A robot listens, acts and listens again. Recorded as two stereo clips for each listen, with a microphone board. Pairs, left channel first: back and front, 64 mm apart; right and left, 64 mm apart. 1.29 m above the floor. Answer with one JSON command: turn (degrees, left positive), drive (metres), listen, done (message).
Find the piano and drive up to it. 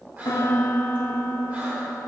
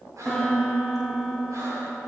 {"turn": -170}
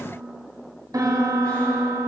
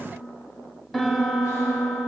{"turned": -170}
{"drive": 1.0}
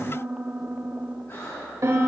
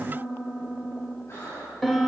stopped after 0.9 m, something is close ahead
{"done": "I am next to the piano."}